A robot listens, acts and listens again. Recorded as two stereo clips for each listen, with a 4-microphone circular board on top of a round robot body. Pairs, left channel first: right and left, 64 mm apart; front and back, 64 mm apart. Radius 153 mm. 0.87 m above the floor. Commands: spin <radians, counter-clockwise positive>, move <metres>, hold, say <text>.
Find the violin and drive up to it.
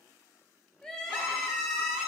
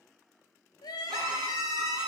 spin 2.88
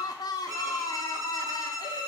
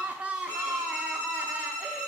spin 1.13
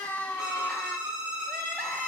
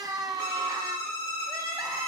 spin 0.26
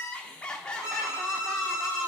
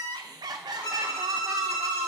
spin 0.17
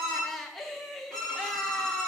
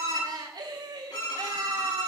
move 1.0
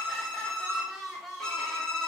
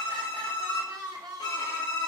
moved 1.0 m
spin -0.17
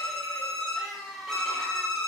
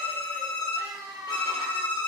move 1.0
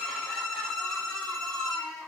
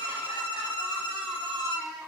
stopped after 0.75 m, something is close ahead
say Arrived at the violin, straight ahead.